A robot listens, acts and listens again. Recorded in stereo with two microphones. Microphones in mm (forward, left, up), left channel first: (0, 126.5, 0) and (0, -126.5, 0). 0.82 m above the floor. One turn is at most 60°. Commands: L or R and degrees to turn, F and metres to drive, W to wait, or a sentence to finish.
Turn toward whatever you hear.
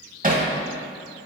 R35
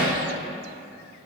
Found it: hammering, straight ahead.